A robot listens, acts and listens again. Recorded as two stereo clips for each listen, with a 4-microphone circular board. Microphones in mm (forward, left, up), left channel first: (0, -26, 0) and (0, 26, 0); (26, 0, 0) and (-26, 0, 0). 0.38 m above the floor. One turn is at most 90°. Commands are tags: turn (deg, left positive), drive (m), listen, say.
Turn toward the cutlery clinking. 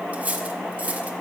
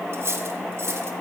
<turn deg="90"/>
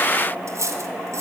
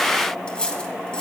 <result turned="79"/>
<turn deg="70"/>
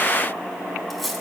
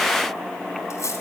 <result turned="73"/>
<say>Found it: cutlery clinking, straight ahead, 1 to 2 m away.</say>